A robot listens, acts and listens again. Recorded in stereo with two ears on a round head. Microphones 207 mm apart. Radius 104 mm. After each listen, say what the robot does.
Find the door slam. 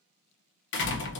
Turn 55° left.
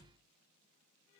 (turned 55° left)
Keep listening.
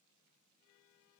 I heard a door slam, but can't make it out now. It was about straight ahead or 70° left.